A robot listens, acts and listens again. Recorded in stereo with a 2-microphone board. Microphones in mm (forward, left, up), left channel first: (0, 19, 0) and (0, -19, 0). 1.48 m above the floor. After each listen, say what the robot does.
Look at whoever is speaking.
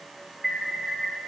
Keep listening.
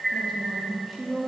Turn 30° left.
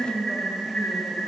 Turn 25° right.
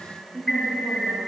Turn 15° right.
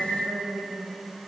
Found it: a woman speaking, straight ahead.